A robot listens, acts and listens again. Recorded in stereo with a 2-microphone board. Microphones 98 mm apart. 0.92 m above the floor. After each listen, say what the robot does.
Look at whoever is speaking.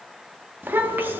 Turn 20° right.
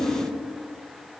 Keep listening.
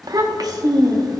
Turn 140° right.
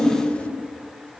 Turn 10° left.
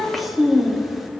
Found it: a child speaking, straight ahead.